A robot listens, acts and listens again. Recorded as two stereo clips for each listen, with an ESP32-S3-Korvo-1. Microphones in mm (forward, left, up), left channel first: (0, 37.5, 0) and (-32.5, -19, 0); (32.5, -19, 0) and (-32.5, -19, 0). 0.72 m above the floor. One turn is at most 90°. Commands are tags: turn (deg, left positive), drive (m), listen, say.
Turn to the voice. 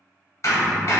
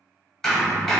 <listen/>
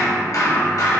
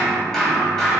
<listen/>
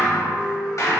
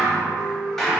<say>I can't make out anyone speaking to turn to.</say>